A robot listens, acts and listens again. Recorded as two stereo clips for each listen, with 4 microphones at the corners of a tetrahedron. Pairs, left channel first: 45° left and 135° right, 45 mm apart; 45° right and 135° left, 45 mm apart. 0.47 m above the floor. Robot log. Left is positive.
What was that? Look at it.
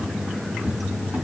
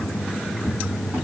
note: The cupboard door: 160° left.
cmd yaw +160
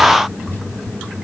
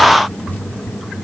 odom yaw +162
end: Facing the cupboard door.